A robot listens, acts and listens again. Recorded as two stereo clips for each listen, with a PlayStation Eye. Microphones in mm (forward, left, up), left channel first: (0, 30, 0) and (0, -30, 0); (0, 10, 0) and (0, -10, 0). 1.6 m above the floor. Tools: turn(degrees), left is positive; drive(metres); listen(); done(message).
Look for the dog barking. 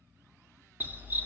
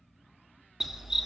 turn(degrees=-35)
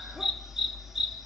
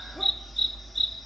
done("Facing the dog barking, 1 to 2 m away.")